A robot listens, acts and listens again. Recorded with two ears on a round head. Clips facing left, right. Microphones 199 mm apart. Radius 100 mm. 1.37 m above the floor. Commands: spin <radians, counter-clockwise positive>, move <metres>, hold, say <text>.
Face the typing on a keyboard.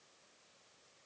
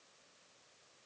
hold
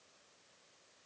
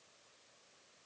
hold
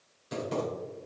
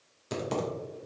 spin -1.13
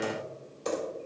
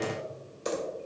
spin -0.35
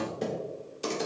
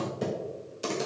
say Found it: typing on a keyboard, straight ahead, 1 to 2 m away.